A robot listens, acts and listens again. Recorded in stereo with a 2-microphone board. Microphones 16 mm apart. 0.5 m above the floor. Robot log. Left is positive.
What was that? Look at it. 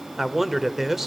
note: The man speaking: about 20° right or 160° right.
cmd yaw -20
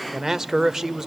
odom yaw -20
note: So it is at 140° right.
cmd yaw -140
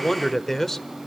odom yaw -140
note: The man speaking is now 25° left.
cmd yaw +25
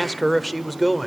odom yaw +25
end: Facing the man speaking, 1 to 2 m away.